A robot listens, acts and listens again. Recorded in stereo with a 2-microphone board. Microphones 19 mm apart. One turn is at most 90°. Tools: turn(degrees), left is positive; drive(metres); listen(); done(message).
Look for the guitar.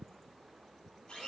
listen()
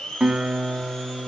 turn(degrees=-55)
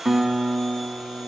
turn(degrees=-20)
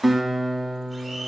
done("Found it: a guitar, straight ahead.")